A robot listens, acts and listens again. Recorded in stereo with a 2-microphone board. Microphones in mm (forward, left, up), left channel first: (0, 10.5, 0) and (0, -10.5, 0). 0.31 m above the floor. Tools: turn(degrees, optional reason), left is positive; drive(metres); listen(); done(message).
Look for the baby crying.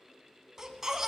turn(degrees=-20, reason="The baby crying: about 20° right or 160° right.")
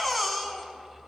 done("Facing the baby crying.")